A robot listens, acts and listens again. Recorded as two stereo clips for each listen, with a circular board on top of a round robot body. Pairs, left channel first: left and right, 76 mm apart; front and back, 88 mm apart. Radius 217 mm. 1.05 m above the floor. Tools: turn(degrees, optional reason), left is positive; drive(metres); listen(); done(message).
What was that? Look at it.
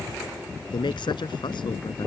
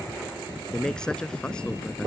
turn(degrees=80, reason="The man speaking: 80° left.")
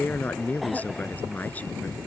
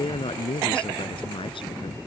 turn(degrees=20, reason="The man speaking is now 20° left.")
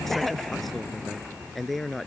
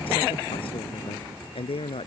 done("Facing the man speaking.")